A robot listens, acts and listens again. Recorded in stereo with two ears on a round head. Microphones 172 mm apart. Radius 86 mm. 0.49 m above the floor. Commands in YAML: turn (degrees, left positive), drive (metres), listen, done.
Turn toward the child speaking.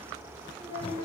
turn: 25
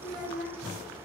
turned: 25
turn: 130
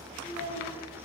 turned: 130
turn: 45
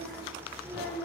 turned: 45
done: "Found it: a child speaking, straight ahead, over 4 m away."